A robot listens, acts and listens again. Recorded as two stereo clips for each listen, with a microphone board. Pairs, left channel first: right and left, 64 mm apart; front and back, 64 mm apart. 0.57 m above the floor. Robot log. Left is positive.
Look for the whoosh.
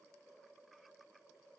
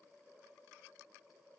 cmd idle
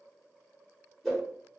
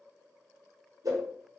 note: The whoosh: 175° right.
cmd yaw -175
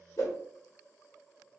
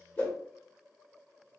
note: The whoosh is now 60° right.
cmd yaw -60
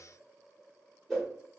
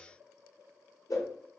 end: Facing the whoosh, 1 to 2 m away.